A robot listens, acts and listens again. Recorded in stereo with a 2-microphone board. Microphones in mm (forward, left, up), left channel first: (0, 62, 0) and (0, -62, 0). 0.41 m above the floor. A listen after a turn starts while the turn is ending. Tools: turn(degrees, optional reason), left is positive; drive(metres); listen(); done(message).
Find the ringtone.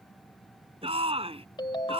turn(degrees=40, reason="The ringtone: about 40° left or 140° left.")
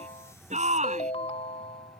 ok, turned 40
turn(degrees=95, reason="So it is at 95° left.")
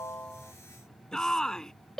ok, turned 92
done("Found it: a ringtone, straight ahead.")